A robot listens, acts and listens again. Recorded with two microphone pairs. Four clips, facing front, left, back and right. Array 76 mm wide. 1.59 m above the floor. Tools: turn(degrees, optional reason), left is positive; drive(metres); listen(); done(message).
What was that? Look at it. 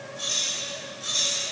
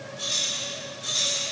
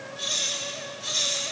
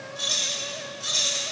turn(degrees=-115, reason="The keys jangling: 115° right.")
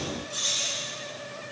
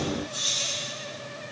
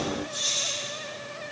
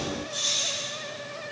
turn(degrees=-40, reason="The keys jangling is now 40° right.")
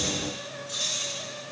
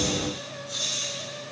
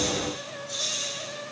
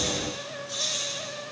turn(degrees=-30, reason="The keys jangling is now 30° right.")
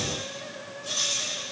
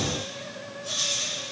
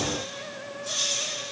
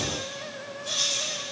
turn(degrees=-20, reason="The keys jangling is now 20° right.")
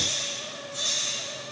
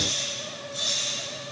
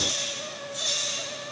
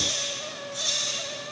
done("Facing the keys jangling, over 4 m away.")